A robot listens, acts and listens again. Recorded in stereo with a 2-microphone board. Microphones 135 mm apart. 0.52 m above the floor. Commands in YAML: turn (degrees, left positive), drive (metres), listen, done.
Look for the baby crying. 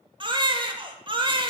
turn: -35
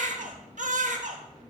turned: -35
turn: -110
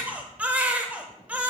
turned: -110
turn: -10
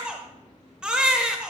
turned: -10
turn: -10
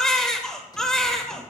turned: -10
done: "Facing the baby crying, under 1 m away."